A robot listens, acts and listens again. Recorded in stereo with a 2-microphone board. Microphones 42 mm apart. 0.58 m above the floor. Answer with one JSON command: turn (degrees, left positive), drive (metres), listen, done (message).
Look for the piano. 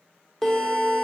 {"turn": 30}
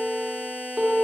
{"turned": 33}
{"turn": -20}
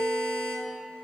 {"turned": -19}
{"done": "Facing the piano."}